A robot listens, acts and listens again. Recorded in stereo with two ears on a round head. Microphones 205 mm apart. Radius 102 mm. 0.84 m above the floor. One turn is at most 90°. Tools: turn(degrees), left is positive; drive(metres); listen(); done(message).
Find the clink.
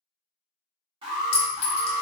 turn(degrees=60)
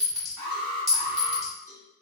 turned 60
done("Facing the clink.")